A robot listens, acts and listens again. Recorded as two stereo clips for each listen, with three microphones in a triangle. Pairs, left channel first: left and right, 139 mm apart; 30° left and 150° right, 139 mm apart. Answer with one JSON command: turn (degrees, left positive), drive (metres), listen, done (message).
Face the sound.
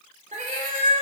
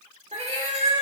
{"turn": -110}
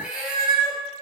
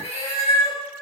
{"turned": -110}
{"done": "Facing the cat meowing."}